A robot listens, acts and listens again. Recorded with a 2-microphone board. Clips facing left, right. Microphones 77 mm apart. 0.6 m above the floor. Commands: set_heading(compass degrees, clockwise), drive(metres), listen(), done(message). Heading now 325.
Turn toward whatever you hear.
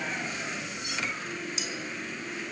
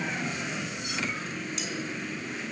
set_heading(295)
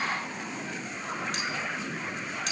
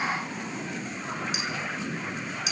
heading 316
set_heading(346)
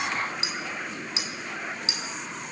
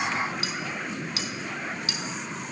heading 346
set_heading(326)
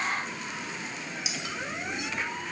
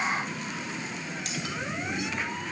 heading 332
done("Found it: cutlery clinking, straight ahead.")